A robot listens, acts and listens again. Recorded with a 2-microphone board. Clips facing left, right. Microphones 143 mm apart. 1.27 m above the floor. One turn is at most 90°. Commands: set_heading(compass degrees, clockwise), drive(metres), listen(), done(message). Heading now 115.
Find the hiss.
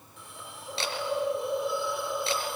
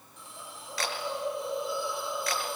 set_heading(50)
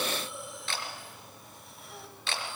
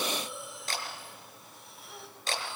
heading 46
done("Found it: a hiss, straight ahead.")